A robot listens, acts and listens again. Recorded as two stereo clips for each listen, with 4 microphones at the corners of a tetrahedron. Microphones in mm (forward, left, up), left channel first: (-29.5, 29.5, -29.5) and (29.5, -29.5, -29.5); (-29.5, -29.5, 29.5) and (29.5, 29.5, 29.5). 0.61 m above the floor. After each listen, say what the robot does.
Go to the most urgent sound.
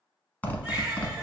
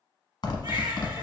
Turn 35° left.
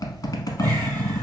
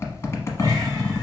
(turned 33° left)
Keep listening.
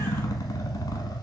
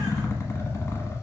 Keep listening.
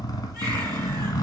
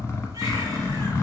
I heard a baby crying from this way, but can't make it out now. I did not reach it.